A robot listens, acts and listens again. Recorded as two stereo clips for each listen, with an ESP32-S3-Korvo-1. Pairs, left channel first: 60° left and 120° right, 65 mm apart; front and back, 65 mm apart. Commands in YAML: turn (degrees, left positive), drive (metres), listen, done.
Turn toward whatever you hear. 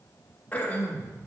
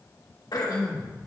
done: "Facing the throat clearing, 1 to 2 m away."